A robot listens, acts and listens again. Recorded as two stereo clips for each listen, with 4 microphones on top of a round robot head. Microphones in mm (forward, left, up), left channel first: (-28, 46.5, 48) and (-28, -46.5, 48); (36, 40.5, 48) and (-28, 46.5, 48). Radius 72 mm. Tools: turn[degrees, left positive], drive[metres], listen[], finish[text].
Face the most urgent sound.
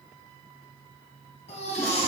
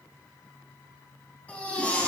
Thought: The baby crying: 65° left.
Action: turn[65]
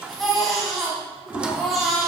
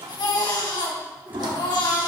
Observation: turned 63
Action: finish[Facing the baby crying, 2 to 4 m away.]